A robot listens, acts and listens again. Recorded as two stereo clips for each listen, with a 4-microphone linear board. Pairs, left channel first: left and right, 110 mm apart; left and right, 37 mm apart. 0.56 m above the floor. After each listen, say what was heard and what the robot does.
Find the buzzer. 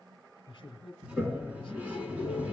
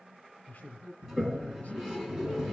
The buzzer: about 55° right or 125° right. Turn 55° right.
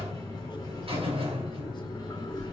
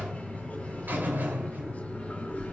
So it is at 65° right. Turn 65° right.
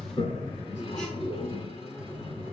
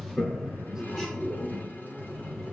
Facing the buzzer, 2 to 4 m away.